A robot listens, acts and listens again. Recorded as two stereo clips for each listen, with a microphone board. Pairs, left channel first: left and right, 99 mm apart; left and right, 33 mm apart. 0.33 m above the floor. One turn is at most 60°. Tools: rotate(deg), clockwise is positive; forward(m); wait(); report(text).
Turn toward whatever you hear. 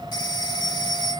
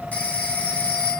rotate(-45)
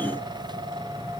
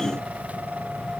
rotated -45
wait()
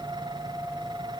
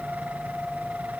wait()
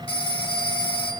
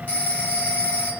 rotate(-60)
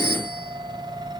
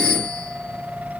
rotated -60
rotate(-25)
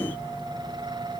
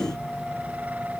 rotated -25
wait()
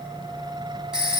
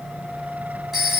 rotate(10)
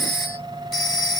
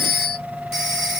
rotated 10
report("Found it: a phone ringing, straight ahead.")